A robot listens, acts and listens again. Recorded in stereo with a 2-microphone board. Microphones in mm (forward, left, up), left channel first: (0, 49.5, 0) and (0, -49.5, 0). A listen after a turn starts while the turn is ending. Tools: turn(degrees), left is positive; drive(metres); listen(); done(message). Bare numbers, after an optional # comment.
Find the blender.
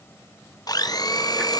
# The blender: about 40° left or 140° left.
turn(40)
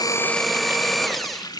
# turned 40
done("Found it: a blender, straight ahead.")